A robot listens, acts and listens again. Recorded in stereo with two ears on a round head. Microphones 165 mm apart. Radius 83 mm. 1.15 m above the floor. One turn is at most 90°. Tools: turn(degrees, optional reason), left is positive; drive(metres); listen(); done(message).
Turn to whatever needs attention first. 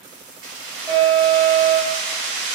turn(degrees=30)
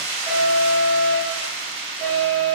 turn(degrees=-20, reason="So it is at 20° right.")
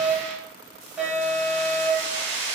done("Facing the alarm.")